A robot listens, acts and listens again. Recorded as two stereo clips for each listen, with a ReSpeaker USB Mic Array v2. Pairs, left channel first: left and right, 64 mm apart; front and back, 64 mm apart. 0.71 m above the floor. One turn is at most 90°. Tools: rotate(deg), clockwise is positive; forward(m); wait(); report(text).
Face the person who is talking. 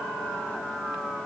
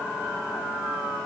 wait()
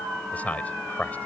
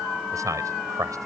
rotate(-90)
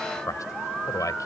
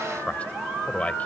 rotate(-70)
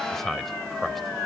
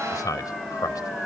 report("Found it: a man speaking, straight ahead.")